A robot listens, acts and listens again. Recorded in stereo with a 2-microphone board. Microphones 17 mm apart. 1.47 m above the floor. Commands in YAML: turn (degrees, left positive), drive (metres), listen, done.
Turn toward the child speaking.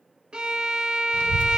turn: 65
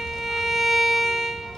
turn: 45
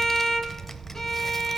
turn: 10
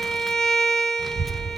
done: "Facing the child speaking."